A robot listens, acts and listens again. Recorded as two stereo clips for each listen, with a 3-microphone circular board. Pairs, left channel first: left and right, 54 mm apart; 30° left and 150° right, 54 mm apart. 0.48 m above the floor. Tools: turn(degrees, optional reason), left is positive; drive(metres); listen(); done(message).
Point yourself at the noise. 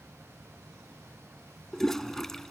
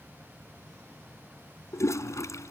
done("Found it: a toilet flushing, straight ahead.")